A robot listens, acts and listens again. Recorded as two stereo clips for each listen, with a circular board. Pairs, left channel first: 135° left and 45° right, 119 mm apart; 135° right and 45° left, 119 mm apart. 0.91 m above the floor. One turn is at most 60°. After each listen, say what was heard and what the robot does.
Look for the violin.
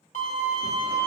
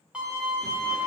The violin: 125° left. Turn 60° left.
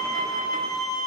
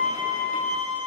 The violin is now 80° left. Turn 60° left.
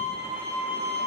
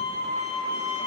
The violin is now 25° left. Turn 25° left.
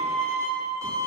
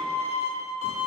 The violin is now 20° left. Turn 20° left.
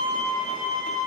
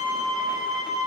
Found it: a violin, straight ahead, 2 to 4 m away.